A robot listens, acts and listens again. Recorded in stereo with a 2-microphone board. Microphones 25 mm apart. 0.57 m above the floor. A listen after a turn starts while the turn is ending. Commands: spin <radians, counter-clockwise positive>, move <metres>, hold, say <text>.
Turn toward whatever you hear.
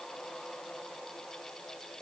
hold
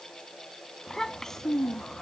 spin 0.35
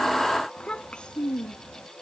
spin 2.44
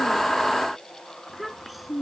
say Facing the child speaking.